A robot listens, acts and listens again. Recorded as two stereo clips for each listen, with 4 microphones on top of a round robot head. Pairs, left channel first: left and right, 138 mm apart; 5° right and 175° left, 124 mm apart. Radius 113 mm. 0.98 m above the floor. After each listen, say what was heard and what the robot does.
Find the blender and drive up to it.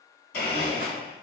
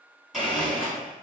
The blender: 90° left. Turn 90° left.
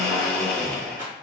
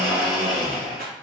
The blender is now 10° left. Turn 10° left.
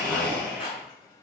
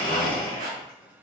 Drive 1.0 m forward.
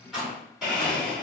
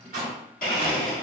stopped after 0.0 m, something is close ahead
Blocked. The blender is further on, straight ahead.